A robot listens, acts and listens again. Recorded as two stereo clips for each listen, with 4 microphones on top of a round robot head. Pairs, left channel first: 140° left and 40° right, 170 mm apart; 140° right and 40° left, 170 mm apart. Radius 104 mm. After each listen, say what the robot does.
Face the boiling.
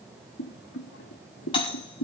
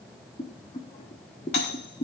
Turn 160° left.
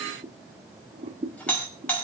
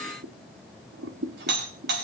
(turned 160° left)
Turn 15° left.
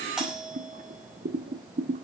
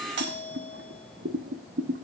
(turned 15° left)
Found it: boiling, straight ahead, under 1 m away.